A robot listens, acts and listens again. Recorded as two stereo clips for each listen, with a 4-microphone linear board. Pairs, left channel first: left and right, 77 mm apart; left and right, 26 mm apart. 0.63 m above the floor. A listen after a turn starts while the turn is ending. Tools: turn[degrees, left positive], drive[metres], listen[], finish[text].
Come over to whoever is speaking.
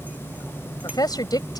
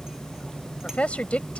Thought: The woman speaking: about 55° left or 125° left.
Action: turn[55]
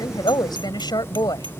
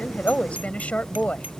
Thought: So it is at 65° left.
Action: turn[65]
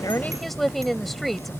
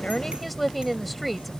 Action: drive[1.0]
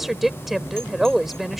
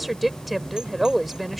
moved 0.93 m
Action: drive[1.0]
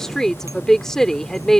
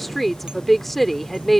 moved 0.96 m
Thought: The woman speaking is now 10° left.
Action: turn[10]
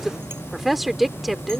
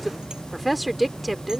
Action: drive[1.0]
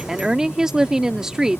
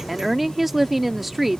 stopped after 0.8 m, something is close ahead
Thought: The woman speaking is now 10° right.
Action: turn[-10]
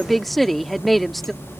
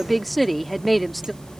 Action: finish[Arrived at the woman speaking, straight ahead.]